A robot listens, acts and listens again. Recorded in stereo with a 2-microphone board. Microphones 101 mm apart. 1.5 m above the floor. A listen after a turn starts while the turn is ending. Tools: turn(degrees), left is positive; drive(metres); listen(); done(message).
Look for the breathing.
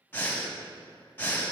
turn(degrees=20)
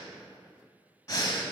turn(degrees=140)
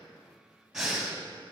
done("Facing the breathing.")